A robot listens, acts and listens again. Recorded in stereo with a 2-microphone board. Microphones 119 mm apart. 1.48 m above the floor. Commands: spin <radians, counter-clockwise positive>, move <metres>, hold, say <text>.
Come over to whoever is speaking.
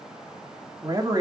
spin -0.61
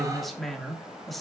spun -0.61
move 1.0
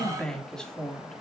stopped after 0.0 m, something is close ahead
say Blocked. The man speaking is further on, straight ahead.